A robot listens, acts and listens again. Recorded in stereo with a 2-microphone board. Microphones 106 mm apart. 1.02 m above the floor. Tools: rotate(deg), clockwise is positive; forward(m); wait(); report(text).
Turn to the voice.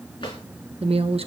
rotate(65)
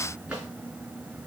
wait()
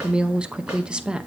rotate(10)
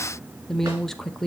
report("Found it: a woman speaking, straight ahead, under 1 m away.")